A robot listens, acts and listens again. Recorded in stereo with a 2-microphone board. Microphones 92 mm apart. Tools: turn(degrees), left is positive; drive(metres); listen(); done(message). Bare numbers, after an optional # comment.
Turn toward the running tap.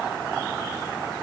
listen()
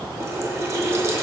# The running tap: about 35° right or 145° right.
turn(-35)
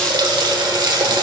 # So it is at 100° right.
turn(-100)
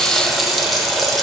done("Found it: a running tap, straight ahead, under 1 m away.")